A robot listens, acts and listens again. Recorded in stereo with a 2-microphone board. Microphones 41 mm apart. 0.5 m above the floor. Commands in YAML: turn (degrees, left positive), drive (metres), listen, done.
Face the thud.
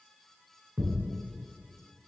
turn: -45
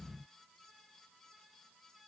listen: true
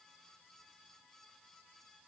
done: "I heard a thud, but can't make it out now. It was about straight ahead or 90° right."